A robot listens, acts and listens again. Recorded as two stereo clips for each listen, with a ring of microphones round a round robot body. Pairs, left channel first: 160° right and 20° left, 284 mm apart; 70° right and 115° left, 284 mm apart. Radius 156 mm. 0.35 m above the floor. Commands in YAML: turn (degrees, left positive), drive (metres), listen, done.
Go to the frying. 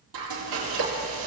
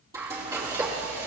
turn: 35
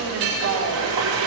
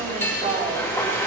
turn: 15
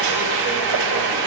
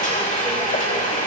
drive: 1.0
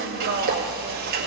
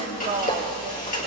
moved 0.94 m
drive: 1.0
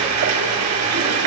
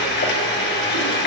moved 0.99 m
turn: -10
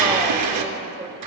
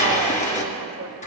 drive: 1.0
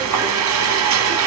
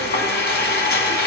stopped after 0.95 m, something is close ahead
turn: -10
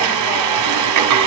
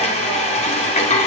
done: "I am next to the frying."